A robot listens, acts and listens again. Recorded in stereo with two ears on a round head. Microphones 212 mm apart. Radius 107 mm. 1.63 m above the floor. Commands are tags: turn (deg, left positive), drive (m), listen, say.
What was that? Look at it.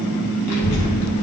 <turn deg="70"/>
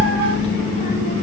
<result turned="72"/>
<turn deg="35"/>
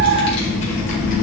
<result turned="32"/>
<turn deg="40"/>
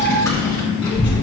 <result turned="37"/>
<turn deg="25"/>
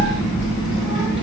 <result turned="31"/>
<say>Facing the child speaking.</say>